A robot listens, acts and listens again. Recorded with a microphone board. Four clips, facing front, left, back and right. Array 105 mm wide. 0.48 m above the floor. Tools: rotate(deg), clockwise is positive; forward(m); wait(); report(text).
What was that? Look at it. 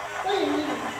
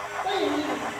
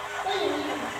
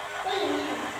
report("Facing the child speaking, 2 to 4 m away.")